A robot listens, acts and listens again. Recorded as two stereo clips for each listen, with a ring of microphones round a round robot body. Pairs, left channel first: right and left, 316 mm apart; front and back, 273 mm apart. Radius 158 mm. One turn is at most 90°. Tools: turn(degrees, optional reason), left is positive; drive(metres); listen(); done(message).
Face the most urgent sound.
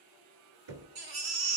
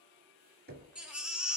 turn(degrees=90, reason="The baby crying: 95° left.")
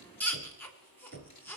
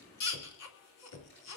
done("Found it: a baby crying, straight ahead, 2 to 4 m away.")